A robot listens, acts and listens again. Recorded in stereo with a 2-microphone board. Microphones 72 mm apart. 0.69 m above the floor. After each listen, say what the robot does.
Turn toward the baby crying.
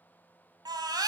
Turn 70° right.
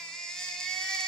Turn 10° left.
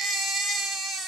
Found it: a baby crying, straight ahead, 2 to 4 m away.